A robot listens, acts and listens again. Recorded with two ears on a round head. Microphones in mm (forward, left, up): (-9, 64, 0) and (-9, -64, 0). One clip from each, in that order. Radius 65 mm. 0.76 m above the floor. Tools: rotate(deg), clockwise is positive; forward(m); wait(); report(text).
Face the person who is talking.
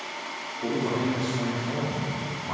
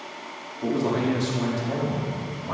rotate(55)
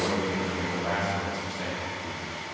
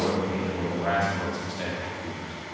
rotate(15)
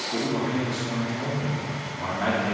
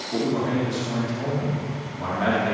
report("Found it: a man speaking, straight ahead.")